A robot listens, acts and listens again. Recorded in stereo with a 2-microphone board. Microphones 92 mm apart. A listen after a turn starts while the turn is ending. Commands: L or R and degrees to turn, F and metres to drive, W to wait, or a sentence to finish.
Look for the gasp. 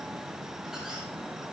W
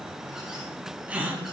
R30
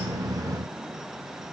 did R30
W
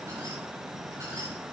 I heard a gasp, but can't make it out now. It was about 15° left or 135° right.